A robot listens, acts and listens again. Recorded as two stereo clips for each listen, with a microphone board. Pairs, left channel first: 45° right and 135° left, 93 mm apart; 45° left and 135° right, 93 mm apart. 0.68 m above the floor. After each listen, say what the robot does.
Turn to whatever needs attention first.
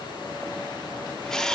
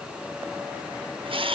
Keep listening.
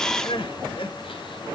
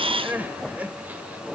Turn 60° right.
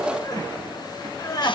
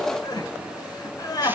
Found it: crying, straight ahead.